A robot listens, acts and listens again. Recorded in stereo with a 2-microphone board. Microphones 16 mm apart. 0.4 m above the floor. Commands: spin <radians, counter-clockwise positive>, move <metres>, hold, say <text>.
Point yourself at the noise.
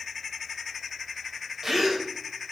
spin -0.52
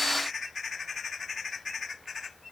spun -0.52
hold
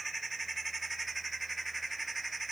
say I heard a gasp, but can't make it out now. It was about straight ahead or 120° right.